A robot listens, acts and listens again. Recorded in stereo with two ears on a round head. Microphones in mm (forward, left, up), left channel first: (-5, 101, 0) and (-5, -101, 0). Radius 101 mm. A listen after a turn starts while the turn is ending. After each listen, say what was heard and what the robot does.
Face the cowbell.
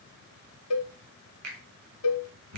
The cowbell: about 65° left or 115° left. Turn 65° left.
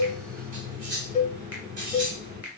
So it is at 35° left. Turn 35° left.
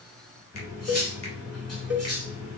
Facing the cowbell.